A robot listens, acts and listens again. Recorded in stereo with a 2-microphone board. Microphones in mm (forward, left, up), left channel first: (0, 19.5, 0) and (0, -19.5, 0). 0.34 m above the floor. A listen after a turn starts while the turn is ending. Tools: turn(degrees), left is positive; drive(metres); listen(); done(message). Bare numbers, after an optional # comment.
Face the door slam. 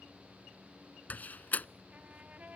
# The door slam: about 45° left or 135° left.
turn(45)
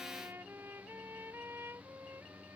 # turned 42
listen()
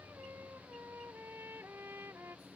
done("I heard a door slam, but can't make it out now. It was about 5° left or 95° left.")